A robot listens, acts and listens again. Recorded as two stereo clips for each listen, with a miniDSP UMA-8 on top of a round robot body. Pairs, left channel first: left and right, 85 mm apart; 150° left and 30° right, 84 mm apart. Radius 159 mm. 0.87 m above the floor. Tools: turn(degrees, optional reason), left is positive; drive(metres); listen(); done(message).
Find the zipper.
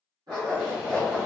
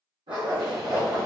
turn(degrees=-45, reason="The zipper: 45° right.")
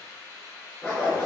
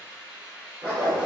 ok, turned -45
done("Found it: a zipper, straight ahead, 1 to 2 m away.")